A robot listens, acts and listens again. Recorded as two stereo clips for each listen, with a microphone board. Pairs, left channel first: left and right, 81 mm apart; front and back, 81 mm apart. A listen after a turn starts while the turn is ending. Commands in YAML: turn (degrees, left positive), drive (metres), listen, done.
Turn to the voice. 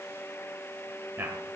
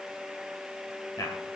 turn: -35
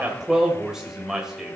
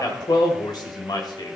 turn: -10
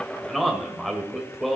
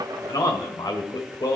done: "Facing the man speaking, 1 to 2 m away."